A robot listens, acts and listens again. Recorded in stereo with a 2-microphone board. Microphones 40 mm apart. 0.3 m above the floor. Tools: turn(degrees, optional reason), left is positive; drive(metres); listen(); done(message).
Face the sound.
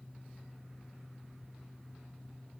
listen()
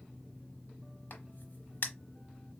turn(degrees=55, reason="The crack: about 55° left or 125° left.")
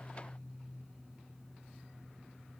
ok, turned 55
listen()
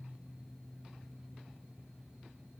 done("I heard a crack, but can't make it out now. It was about straight ahead or 70° left.")